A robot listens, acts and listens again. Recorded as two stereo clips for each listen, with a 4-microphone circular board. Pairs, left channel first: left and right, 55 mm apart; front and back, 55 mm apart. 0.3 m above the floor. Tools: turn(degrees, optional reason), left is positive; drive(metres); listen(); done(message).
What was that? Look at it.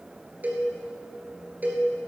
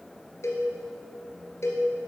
turn(degrees=-30, reason="The cowbell: 30° right.")
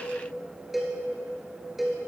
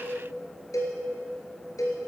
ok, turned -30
done("Facing the cowbell.")